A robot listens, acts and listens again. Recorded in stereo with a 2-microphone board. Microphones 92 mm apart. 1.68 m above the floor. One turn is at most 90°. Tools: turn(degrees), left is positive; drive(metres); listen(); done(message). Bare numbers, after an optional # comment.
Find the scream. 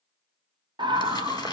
# The scream: about 55° right or 125° right.
turn(-55)
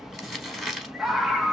done("Found it: a scream, straight ahead, under 1 m away.")